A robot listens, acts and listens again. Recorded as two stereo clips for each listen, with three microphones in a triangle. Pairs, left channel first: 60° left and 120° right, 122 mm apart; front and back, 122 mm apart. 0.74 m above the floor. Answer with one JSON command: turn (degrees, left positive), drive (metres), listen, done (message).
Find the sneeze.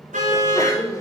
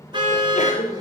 {"done": "Facing the sneeze."}